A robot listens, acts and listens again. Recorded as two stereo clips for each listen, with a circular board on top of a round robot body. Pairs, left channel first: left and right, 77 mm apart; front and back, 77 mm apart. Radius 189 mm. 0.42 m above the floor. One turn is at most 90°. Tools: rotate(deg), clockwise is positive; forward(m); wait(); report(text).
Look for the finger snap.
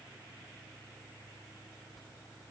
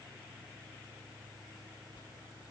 wait()
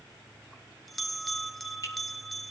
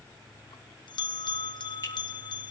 rotate(-45)
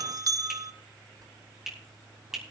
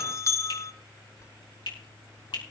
report("Found it: a finger snap, straight ahead.")